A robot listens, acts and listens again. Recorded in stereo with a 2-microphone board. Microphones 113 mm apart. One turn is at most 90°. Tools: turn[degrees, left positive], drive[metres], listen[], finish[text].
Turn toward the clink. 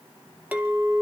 Action: turn[-30]
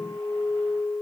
Thought: So it is at 20° left.
Action: turn[20]
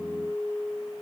Action: finish[Facing the clink.]